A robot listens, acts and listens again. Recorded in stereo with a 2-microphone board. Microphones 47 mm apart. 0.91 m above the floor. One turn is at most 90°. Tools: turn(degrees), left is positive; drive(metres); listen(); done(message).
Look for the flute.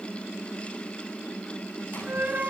turn(degrees=-45)
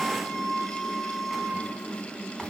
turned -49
done("Facing the flute, 2 to 4 m away.")